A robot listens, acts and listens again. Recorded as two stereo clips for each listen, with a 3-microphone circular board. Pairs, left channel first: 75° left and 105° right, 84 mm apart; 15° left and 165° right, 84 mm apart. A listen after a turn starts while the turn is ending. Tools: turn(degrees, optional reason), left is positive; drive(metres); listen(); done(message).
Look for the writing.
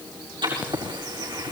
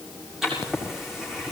turn(degrees=-80, reason="The writing: 80° right.")
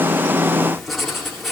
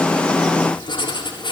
turn(degrees=-15, reason="The writing is now 15° right.")
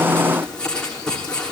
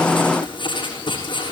done("Found it: writing, straight ahead, over 4 m away.")